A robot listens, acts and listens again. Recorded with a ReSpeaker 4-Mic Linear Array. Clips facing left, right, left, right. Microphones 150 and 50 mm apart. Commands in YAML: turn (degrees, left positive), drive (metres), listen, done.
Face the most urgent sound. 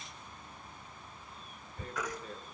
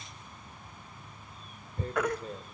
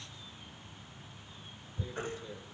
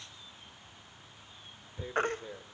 turn: -60
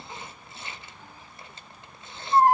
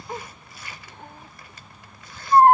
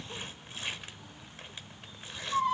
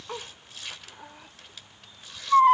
turn: -60
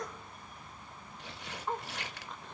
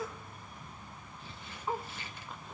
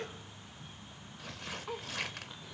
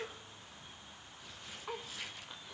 listen: true
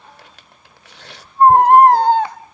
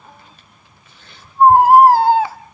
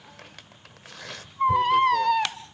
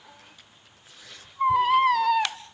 done: "Found it: a baby crying, straight ahead, under 1 m away."